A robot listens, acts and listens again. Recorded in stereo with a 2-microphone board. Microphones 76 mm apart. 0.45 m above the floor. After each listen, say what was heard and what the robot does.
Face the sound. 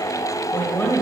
The woman speaking: about 25° left or 155° left. Turn 25° left.
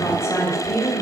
The woman speaking: about 30° left or 150° left. Turn 30° left.
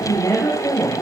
So it is at 135° left. Turn 135° left.
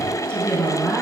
The woman speaking is now 15° left. Turn 15° left.
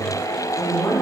The woman speaking is now 10° left. Turn 10° left.
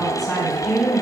Found it: a woman speaking, straight ahead.